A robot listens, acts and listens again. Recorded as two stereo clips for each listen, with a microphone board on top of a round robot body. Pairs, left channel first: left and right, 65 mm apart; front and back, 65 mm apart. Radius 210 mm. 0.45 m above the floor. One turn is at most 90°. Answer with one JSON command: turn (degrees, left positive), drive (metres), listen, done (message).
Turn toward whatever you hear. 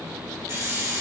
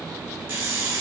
{"turn": -90}
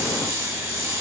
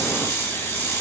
{"turn": -45}
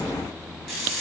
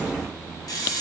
{"done": "Found it: a hiss, straight ahead, 1 to 2 m away."}